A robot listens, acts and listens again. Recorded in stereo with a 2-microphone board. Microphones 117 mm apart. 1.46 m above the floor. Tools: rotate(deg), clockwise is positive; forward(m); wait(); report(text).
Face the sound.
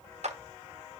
rotate(65)
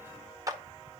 rotate(30)
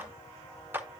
rotate(20)
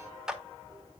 report("Facing the clap, under 1 m away.")